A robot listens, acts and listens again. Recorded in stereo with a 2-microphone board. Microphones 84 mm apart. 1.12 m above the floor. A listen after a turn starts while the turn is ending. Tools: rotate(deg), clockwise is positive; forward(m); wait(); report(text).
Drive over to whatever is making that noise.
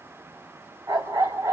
rotate(45)
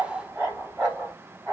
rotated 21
rotate(25)
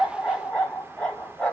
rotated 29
forward(1.0)
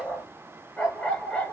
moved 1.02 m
rotate(-10)
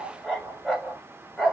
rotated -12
forward(1.0)
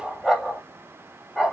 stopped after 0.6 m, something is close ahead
report("Arrived at the dog barking, straight ahead.")